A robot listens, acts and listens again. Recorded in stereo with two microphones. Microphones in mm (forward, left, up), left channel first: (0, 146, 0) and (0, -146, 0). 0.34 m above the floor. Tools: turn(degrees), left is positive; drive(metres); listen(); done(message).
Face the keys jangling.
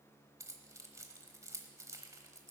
turn(degrees=-30)
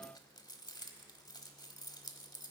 turn(degrees=15)
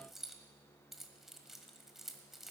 done("Facing the keys jangling, 1 to 2 m away.")